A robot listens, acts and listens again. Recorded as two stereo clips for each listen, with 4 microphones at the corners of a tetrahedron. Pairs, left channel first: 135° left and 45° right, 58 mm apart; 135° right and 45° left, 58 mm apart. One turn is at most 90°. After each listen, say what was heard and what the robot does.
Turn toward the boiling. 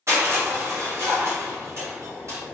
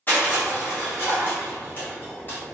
The boiling: 145° left. Turn 90° left.
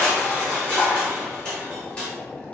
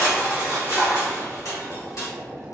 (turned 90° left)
The boiling is now 75° left. Turn 75° left.
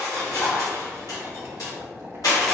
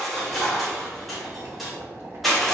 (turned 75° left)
Found it: boiling, straight ahead.